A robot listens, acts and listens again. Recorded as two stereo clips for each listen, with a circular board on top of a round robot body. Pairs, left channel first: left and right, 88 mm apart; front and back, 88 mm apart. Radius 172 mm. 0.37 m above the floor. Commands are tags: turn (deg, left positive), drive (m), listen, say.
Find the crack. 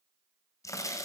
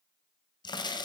<turn deg="35"/>
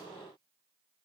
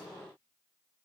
<say>I heard a crack from this way, but can't make it out now.</say>